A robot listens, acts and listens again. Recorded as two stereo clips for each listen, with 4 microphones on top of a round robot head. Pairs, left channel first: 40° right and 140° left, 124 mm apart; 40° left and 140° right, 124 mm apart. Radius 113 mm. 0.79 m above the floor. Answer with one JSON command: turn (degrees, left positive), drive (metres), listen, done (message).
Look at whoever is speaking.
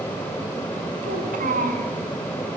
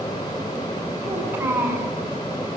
{"turn": 150}
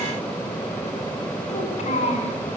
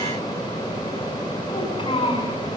{"turn": -10}
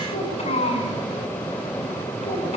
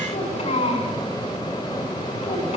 {"done": "Found it: a child speaking, straight ahead, over 4 m away."}